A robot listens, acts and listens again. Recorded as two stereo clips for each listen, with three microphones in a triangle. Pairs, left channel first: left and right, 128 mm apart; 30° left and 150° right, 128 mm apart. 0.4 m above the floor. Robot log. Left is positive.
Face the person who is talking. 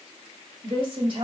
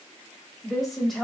note: The woman speaking: 60° right.
cmd yaw -60
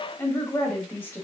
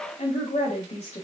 note: The woman speaking is now 20° left.
cmd yaw +20
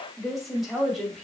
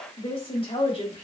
end: Facing the woman speaking.